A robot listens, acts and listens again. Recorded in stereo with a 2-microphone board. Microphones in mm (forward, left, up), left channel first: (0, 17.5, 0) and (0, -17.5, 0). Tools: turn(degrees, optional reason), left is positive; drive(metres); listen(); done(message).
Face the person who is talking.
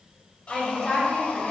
turn(degrees=30)
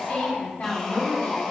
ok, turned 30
turn(degrees=130, reason="So it is at 130° left.")
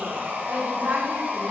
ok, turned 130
turn(degrees=-35, reason="The woman speaking is now 35° right.")
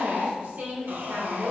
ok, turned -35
turn(degrees=-45, reason="The woman speaking is now 45° right.")
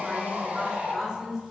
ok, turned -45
turn(degrees=-10, reason="The woman speaking is now 10° right.")
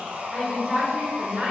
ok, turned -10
done("Facing the woman speaking.")